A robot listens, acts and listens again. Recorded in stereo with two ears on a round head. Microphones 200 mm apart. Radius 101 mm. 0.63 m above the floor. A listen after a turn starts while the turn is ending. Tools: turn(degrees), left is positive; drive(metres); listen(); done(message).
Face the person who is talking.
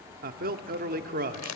turn(degrees=-40)
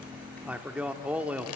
done("Found it: a man speaking, straight ahead.")